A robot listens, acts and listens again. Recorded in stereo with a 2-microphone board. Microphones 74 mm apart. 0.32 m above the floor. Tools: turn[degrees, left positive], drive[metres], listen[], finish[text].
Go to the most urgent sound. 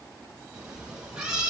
Action: listen[]
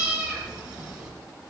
Action: listen[]
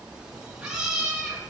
Action: finish[I can't make out anything urgent to turn to.]